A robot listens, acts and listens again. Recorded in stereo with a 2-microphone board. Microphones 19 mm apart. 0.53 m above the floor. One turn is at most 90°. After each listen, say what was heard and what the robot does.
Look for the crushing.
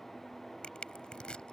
The crushing: about 70° left or 110° left. Turn 70° left.
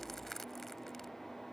So it is at 20° left. Turn 20° left.
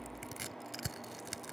Facing the crushing.